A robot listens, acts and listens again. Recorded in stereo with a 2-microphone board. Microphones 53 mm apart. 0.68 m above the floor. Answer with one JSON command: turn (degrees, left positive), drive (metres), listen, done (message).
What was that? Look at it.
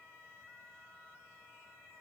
{"listen": true}
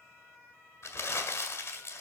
{"turn": 70}
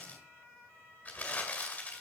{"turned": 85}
{"turn": 25}
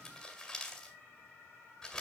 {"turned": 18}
{"turn": 10}
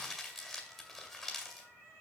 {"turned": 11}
{"done": "Facing the crumpling."}